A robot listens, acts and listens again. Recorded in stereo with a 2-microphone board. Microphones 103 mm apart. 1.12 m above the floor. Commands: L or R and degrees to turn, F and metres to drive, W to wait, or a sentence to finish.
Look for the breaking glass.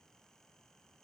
W
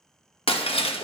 L90
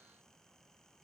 I heard breaking glass from this way, but can't make it out now.